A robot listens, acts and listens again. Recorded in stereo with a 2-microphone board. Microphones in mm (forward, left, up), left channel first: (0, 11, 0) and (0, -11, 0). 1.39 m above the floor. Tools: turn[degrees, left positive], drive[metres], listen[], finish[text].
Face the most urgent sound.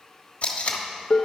Action: listen[]
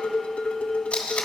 Action: listen[]
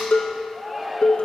Thought: The shout: about 15° right or 165° right.
Action: turn[-15]
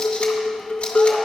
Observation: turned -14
Action: listen[]
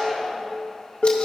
Action: finish[Found it: a shout, straight ahead, under 1 m away.]